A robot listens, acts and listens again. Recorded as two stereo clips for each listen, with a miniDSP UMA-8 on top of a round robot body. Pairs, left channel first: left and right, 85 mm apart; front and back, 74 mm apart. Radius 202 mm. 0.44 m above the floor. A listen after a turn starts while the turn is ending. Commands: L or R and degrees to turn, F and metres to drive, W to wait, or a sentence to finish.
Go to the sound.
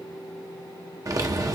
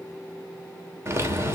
R130
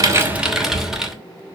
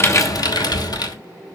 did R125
F1.0
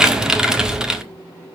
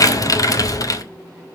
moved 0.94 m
R10
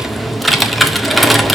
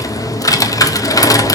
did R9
F1.0
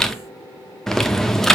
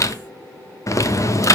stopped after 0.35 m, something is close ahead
L10
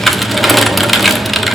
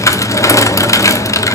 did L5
I am next to the typing on a keyboard.